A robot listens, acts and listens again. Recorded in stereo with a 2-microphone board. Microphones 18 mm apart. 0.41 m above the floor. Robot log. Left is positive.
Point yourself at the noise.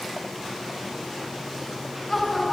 cmd yaw +30
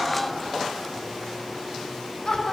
note: So it is at 155° left.
cmd yaw +155
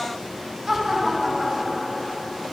end: Found it: laughter, straight ahead.